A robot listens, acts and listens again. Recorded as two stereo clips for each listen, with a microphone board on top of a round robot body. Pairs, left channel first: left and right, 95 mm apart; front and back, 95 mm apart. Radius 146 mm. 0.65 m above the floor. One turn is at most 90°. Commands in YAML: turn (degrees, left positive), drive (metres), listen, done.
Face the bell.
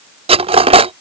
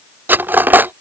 listen: true
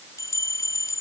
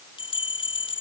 turn: 30
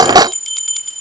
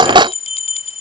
done: "Facing the bell."